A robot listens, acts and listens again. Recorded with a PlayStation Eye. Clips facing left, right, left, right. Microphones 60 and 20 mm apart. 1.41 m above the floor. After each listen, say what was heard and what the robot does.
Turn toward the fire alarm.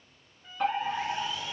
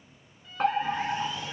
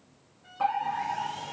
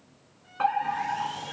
The fire alarm: about 50° right or 130° right. Turn 50° right.
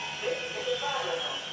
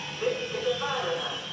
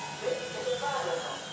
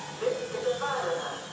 So it is at 60° right. Turn 60° right.
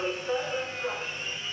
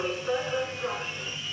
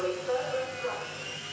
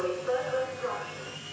The fire alarm is now 30° right. Turn 30° right.
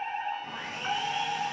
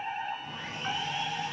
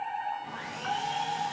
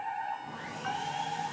Found it: a fire alarm, straight ahead.